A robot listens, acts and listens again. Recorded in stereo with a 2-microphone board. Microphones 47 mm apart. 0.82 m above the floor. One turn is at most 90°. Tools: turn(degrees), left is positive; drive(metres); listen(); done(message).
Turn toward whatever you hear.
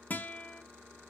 turn(degrees=45)
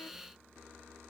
listen()
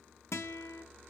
turn(degrees=90)
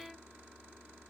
listen()
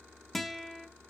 done("Facing the guitar.")